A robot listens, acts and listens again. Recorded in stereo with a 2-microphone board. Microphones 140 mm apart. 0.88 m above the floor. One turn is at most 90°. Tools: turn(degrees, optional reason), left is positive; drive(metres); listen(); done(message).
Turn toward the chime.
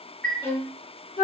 turn(degrees=30)
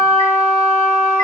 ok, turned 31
listen()
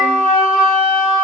listen()
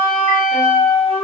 done("I heard a chime, but can't make it out now. It was about 25° right or 140° left.")